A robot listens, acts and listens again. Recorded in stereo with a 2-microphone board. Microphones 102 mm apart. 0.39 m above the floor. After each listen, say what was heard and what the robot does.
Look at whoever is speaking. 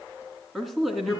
Turn 30° left.
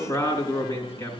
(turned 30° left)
So it is at 150° left. Turn 150° left.
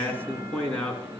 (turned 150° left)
The man speaking is now 15° left. Turn 15° left.
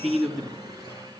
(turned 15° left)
Found it: a man speaking, straight ahead, 2 to 4 m away.